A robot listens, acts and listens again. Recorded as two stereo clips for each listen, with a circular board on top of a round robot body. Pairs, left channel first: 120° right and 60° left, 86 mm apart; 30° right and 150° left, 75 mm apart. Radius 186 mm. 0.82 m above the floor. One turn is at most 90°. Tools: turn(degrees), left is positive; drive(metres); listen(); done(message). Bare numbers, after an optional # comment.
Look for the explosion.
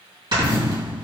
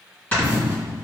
# The explosion: 90° left.
turn(90)
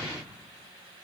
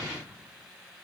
done("Facing where the explosion came from. I can't hear it now.")